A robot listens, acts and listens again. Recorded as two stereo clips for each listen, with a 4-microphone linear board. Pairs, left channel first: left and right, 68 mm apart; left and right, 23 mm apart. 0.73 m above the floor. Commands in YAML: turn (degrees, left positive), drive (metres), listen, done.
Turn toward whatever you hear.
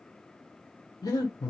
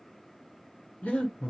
turn: 70
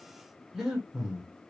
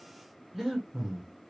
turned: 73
done: "Found it: breathing, straight ahead, 1 to 2 m away."